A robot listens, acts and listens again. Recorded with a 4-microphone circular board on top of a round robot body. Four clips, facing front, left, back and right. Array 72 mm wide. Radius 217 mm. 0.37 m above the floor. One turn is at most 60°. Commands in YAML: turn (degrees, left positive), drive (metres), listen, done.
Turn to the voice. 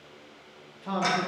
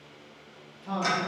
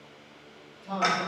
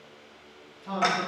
done: "Facing the man speaking, 1 to 2 m away."